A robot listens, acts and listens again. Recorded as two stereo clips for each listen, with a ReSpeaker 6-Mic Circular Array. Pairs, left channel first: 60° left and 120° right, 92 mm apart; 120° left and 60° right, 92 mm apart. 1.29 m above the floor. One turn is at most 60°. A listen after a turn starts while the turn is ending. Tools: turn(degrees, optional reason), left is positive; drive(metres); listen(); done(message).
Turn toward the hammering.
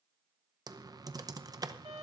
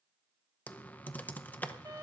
listen()
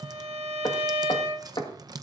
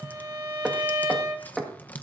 turn(degrees=25, reason="The hammering: 25° left.")
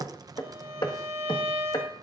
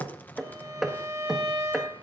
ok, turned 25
turn(degrees=25, reason="The hammering is now 25° left.")
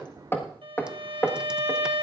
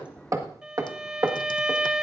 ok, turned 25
done("Facing the hammering.")